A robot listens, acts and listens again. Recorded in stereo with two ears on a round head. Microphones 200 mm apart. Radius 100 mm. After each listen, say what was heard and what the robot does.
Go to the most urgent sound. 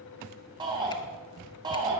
The shout: about 20° right or 160° right. Turn 20° right.
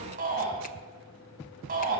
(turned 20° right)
So it is at 140° right. Turn 140° right.
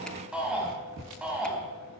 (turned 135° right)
Drive 1.0 m forward.
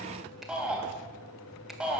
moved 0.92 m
Drive 1.0 m forward.
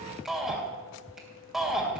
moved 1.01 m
Drive 1.0 m forward.
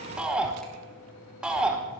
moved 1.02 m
Drive 1.0 m forward.
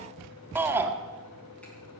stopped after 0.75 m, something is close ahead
The shout is now 10° right. Turn 10° right.
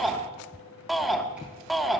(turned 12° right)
Arrived at the shout, straight ahead.